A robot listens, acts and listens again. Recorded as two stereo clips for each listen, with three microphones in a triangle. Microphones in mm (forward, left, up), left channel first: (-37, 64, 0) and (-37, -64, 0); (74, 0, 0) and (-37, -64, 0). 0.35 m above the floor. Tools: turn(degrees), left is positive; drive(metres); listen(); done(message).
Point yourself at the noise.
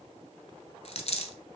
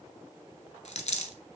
turn(degrees=55)
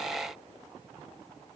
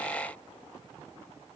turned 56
done("I heard a dropped coin from this way, but can't make it out now.")